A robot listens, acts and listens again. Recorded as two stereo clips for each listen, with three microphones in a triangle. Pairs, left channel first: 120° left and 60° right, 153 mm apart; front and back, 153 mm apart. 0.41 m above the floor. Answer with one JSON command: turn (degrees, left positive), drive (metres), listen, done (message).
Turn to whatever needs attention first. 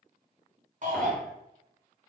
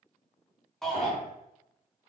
{"turn": -90}
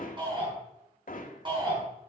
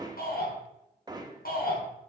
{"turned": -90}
{"done": "Found it: a shout, straight ahead."}